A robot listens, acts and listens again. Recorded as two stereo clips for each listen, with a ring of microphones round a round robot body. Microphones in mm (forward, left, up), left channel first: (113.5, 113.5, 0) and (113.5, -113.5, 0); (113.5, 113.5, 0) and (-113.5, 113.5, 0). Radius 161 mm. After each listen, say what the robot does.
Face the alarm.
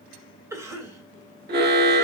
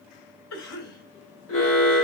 Turn 45° right.
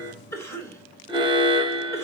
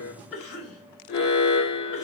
Turn 20° right.
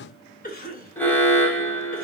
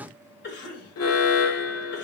Turn 10° left.
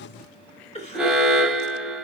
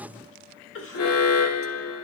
Facing the alarm.